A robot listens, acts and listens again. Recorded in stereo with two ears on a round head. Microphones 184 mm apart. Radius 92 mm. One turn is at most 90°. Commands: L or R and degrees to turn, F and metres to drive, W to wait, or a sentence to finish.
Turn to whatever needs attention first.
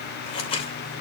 W
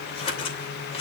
W
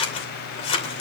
I can't make out anything urgent to turn to.